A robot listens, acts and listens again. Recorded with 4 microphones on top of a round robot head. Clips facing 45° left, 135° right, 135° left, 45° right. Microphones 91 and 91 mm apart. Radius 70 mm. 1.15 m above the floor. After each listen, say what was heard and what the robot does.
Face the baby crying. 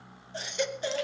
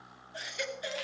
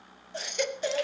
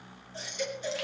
The baby crying: 105° left. Turn 105° left.
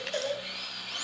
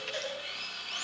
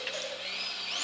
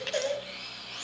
The baby crying is now 10° right. Turn 10° right.
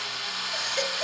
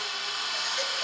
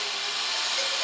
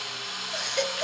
Keep listening.
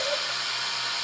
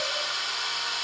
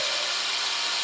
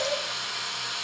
Keep listening.
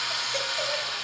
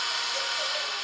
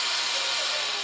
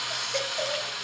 Facing where the baby crying came from. I can't hear it now.